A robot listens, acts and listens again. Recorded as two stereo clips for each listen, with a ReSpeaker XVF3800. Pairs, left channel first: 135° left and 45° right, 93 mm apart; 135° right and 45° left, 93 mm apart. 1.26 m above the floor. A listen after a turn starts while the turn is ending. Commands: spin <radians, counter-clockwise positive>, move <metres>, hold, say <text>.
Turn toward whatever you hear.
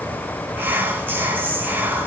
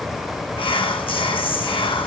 spin -2.01
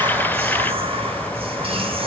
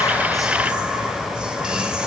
spin -0.61
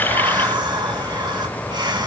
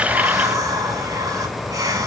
say Facing the whispering, 1 to 2 m away.